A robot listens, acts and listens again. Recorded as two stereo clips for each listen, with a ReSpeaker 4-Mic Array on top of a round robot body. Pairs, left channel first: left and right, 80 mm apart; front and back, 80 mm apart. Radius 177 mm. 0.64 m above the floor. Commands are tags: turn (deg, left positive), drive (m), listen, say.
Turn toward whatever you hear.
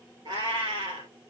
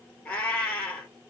<turn deg="-75"/>
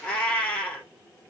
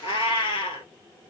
<turn deg="10"/>
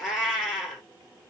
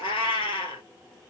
<say>Facing the cat meowing.</say>